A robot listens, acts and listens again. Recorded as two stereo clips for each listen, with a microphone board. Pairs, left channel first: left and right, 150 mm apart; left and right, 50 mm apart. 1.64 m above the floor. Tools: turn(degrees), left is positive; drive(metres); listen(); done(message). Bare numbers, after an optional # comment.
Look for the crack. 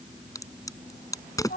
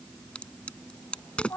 # The crack: about 20° left or 160° left.
turn(20)
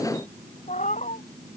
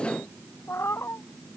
listen()
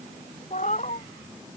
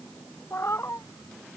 done("I heard a crack, but can't make it out now. It was about straight ahead or 140° left.")